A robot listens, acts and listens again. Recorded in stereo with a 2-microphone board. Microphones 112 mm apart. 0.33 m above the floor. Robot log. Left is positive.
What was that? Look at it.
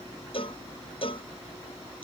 note: The cowbell: about 55° left or 125° left.
cmd yaw +55
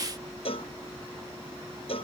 note: So it is at 65° left.
cmd yaw +65
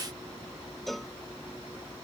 end: Found it: a cowbell, straight ahead.